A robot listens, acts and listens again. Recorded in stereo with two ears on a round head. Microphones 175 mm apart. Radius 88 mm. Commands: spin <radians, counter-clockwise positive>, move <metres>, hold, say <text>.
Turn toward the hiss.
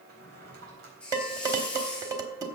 spin 0.52
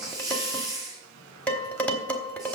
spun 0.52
spin -0.35
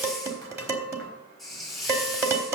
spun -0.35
say Found it: a hiss, straight ahead.